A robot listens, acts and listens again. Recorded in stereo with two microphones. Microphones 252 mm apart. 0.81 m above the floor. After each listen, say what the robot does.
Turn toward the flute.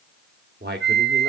Turn 40° right.
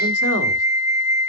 Turn 10° right.
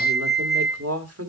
Facing the flute.